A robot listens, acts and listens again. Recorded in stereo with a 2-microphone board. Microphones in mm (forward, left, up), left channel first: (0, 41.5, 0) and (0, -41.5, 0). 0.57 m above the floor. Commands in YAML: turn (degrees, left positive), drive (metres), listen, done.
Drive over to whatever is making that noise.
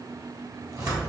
turn: -45
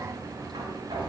turn: -95
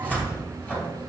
turn: 15
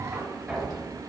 drive: 1.0
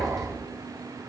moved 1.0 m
drive: 1.0
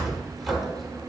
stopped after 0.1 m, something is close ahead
done: "Arrived at the cupboard door, straight ahead."